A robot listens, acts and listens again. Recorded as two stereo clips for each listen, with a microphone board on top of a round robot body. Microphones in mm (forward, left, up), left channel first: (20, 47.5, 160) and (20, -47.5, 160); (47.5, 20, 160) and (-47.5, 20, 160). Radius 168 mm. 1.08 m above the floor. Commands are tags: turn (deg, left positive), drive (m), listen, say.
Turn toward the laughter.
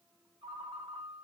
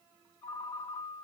<listen/>
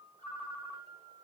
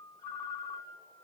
<listen/>
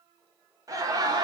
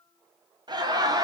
<turn deg="-135"/>
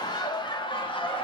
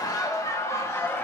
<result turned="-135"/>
<turn deg="65"/>
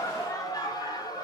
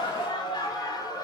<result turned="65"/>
<turn deg="40"/>
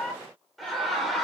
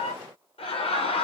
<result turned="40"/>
<say>Facing the laughter, 1 to 2 m away.</say>